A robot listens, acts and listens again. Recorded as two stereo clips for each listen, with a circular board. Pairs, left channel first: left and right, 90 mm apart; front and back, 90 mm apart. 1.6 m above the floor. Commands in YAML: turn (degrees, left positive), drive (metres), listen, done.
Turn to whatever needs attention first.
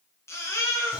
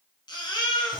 turn: 30
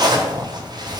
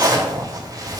listen: true
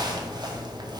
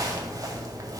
listen: true
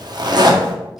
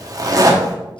done: "I heard a baby crying from this way, but can't make it out now."